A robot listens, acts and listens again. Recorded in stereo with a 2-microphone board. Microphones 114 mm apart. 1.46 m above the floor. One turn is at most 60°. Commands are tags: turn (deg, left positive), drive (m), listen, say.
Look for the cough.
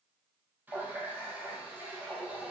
<listen/>
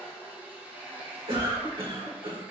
<turn deg="-55"/>
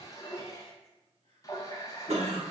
<turn deg="-60"/>
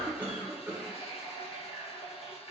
<turn deg="-15"/>
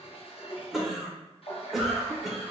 <say>Facing the cough.</say>